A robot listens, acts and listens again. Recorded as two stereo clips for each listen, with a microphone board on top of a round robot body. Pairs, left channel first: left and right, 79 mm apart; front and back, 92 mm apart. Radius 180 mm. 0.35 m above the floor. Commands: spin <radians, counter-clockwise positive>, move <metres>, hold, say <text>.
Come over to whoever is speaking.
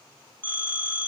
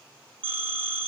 hold
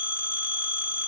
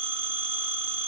hold
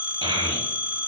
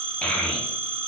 spin -1.31
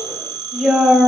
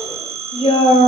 move 1.0
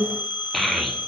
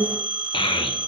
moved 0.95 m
move 1.0
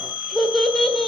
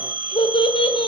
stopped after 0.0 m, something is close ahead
say I am next to the child speaking.